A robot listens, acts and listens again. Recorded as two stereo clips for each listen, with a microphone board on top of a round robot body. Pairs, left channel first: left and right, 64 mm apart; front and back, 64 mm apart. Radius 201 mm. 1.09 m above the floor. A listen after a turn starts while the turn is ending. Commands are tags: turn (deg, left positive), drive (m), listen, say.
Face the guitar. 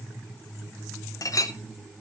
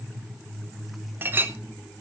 <listen/>
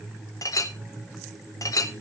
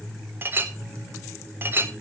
<listen/>
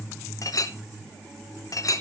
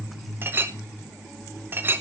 <say>I can't make out a guitar, only a clink.</say>